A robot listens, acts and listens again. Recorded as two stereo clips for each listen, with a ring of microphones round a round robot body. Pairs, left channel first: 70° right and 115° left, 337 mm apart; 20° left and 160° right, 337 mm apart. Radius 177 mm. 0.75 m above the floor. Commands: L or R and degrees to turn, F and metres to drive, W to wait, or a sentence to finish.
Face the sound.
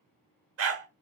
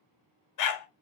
L60
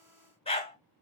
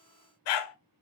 Found it: a dog barking, straight ahead.